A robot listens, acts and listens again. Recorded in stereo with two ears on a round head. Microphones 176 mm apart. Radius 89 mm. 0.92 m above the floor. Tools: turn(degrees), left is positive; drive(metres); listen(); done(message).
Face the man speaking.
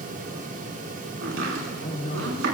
turn(degrees=45)
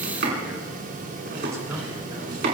listen()
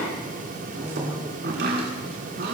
turn(degrees=-30)
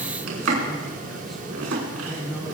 done("Facing the man speaking.")